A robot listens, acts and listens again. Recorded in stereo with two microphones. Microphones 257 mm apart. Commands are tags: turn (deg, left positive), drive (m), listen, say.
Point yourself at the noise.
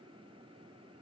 <listen/>
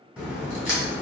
<turn deg="-30"/>
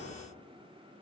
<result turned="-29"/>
<listen/>
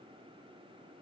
<say>I heard a crack, but can't make it out now. It was about 25° left or 150° right.</say>